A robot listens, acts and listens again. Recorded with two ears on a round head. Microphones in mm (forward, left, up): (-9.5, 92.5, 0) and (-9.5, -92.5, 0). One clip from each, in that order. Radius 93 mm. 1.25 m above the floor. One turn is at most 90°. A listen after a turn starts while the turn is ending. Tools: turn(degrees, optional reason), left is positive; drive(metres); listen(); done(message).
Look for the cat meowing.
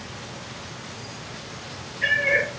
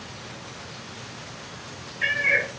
turn(degrees=-35, reason="The cat meowing: about 35° right or 145° right.")
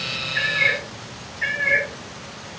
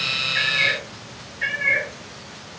turn(degrees=-20, reason="So it is at 20° right.")
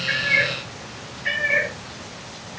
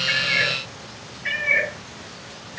turn(degrees=-25, reason="The cat meowing is now 25° right.")
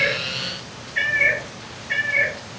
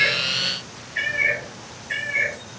done("Found it: a cat meowing, straight ahead.")